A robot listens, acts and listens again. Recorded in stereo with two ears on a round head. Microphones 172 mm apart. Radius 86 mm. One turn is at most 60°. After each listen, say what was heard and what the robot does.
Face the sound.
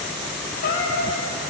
The cat meowing: about 50° left or 130° left. Turn 50° left.
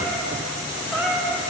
Found it: a cat meowing, straight ahead.